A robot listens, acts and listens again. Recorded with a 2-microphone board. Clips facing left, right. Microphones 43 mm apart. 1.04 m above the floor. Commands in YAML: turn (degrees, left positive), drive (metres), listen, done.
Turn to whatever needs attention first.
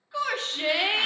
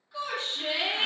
turn: 70
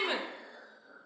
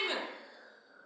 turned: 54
turn: 20
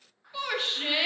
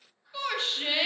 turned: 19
done: "Found it: a shout, straight ahead, under 1 m away."